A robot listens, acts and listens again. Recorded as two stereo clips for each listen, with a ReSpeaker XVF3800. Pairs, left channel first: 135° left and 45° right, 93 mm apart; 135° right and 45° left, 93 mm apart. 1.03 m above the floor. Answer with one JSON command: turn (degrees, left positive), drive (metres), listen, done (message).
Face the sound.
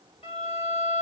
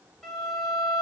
{"turn": 135}
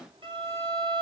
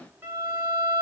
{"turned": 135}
{"turn": -25}
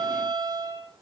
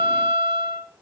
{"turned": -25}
{"done": "Found it: a violin, straight ahead."}